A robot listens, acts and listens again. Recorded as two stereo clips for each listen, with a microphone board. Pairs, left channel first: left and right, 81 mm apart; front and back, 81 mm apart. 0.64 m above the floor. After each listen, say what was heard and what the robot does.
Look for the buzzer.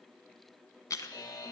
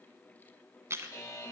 The buzzer: 55° left. Turn 55° left.
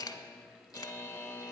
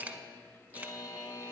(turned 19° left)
The buzzer is now 35° left. Turn 35° left.
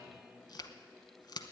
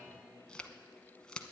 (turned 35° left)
Keep listening.
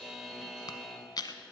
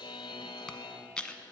Found it: a buzzer, straight ahead.